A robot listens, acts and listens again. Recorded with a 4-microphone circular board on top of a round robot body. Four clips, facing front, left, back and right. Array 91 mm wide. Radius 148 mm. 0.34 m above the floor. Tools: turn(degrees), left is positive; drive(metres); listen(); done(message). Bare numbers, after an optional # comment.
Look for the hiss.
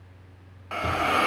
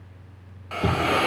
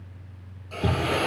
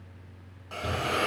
# The hiss: 20° left.
turn(20)
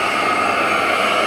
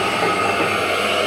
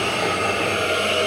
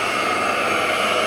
done("Facing the hiss.")